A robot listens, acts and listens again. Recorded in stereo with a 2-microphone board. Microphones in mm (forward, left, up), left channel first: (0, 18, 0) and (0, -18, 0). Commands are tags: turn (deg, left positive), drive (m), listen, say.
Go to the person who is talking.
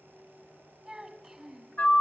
<turn deg="-30"/>
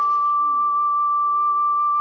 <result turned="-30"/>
<listen/>
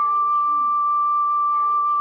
<listen/>
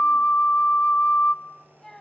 <turn deg="20"/>
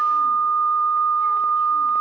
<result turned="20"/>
<listen/>
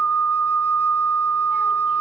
<listen/>
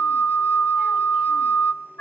<say>I heard a child speaking from this way, but can't make it out now. I did not reach it.</say>